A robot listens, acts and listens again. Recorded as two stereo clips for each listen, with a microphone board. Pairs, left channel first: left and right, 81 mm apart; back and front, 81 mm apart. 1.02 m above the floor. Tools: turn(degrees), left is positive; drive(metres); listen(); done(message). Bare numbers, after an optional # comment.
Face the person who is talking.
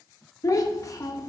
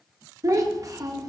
# The child speaking: 45° left.
turn(45)
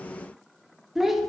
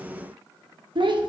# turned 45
done("Facing the child speaking.")